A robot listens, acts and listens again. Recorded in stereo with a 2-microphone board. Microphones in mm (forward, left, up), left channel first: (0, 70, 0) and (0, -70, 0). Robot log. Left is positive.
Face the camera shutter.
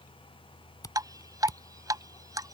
note: The camera shutter: about 30° left or 150° left.
cmd yaw +30
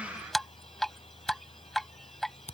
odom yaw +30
note: So it is at 120° left.
cmd yaw +120
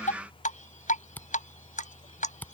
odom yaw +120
note: The camera shutter is now 15° left.
cmd yaw +15
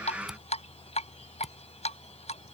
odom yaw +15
cmd idle
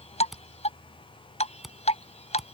end: Facing the camera shutter.